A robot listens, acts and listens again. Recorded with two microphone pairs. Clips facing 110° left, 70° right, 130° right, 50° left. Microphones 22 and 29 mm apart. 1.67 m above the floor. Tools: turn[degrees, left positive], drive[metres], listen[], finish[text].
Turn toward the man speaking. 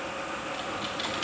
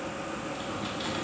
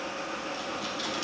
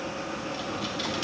Action: listen[]
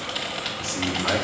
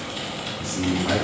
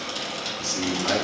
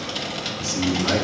Thought: The man speaking: 155° left.
Action: turn[155]
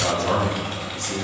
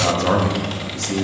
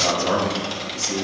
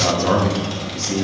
Thought: The man speaking is now 10° right.
Action: turn[-10]
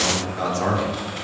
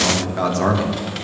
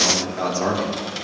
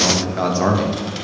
Action: finish[Facing the man speaking.]